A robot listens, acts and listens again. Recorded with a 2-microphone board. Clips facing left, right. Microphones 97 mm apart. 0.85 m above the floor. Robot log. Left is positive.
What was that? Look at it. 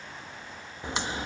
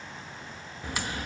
note: The crack: about 20° left or 160° left.
cmd yaw +20
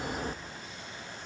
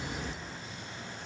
note: So it is at 135° left.
cmd yaw +135
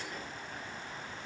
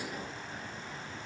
end: Facing where the crack came from. I can't hear it now.